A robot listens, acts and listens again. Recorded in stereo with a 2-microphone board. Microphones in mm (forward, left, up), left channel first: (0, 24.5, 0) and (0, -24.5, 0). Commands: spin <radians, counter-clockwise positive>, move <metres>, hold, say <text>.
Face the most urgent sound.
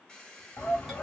spin 0.87
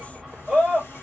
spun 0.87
say Facing the shout.